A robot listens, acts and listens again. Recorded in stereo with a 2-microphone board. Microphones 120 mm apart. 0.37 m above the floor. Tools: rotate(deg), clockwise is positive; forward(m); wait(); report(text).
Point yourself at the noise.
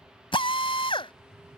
rotate(-45)
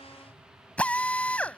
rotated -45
rotate(-10)
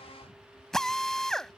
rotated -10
report("Facing the drill.")